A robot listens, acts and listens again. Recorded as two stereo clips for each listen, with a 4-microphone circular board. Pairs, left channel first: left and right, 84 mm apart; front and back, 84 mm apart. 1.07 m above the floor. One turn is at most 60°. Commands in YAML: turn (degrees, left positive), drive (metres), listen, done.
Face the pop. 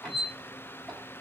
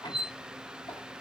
listen: true
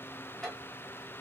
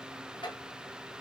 listen: true
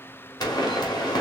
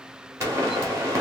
turn: 60
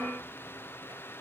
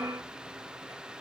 turn: 60
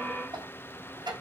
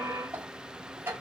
turn: 10
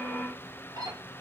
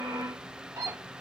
done: "Facing where the pop came from. I can't hear it now."